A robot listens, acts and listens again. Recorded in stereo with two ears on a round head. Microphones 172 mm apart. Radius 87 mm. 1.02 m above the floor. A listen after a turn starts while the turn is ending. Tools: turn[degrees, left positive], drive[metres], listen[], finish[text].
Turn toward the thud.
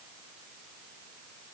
Action: listen[]
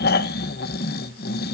Action: listen[]
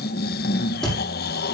Action: turn[30]
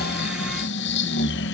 Action: listen[]
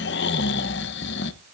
Action: finish[I heard a thud, but can't make it out now. It was about 30° right or 150° left.]